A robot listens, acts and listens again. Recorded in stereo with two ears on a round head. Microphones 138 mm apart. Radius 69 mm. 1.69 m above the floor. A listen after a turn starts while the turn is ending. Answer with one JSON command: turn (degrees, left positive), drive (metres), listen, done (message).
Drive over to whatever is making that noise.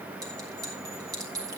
{"turn": -25}
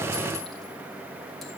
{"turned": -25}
{"listen": true}
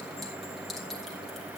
{"listen": true}
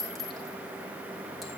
{"drive": 1.0}
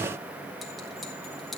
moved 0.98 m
{"listen": true}
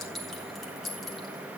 {"drive": 1.0}
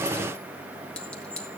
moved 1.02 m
{"drive": 1.0}
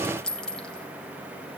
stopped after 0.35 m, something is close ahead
{"done": "Arrived at the clink, straight ahead."}